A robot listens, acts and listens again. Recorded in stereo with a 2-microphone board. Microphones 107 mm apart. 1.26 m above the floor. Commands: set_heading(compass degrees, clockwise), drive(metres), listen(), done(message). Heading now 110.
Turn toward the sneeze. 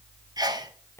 set_heading(150)
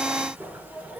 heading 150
listen()
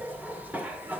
done("I heard a sneeze, but can't make it out now. It was about straight ahead or 100° right.")